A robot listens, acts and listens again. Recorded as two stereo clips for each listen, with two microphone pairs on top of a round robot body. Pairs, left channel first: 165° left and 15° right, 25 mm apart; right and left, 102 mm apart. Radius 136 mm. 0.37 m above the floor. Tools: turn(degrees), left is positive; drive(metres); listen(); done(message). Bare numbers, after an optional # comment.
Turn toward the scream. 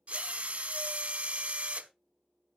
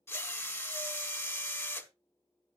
listen()
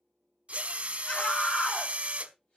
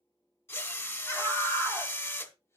# The scream: 155° right.
turn(-155)
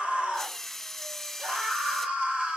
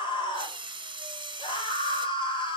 # The scream is now 55° right.
turn(-55)
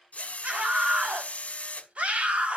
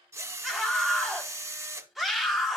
done("Facing the scream.")